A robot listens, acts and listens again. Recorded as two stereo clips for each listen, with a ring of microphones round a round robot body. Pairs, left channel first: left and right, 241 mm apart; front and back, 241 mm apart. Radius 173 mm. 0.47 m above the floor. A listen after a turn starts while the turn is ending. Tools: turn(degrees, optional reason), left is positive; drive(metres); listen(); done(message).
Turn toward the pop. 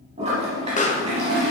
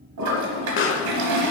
turn(degrees=30, reason="The pop: 30° left.")
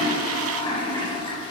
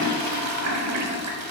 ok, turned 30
done("I heard a pop from this way, but can't make it out now.")